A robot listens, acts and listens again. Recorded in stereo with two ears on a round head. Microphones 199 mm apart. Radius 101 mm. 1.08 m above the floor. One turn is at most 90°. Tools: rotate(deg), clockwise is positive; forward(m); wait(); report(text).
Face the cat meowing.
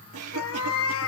rotate(-65)
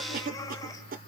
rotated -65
wait()
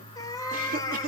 rotate(-20)
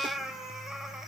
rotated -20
report("Found it: a cat meowing, straight ahead.")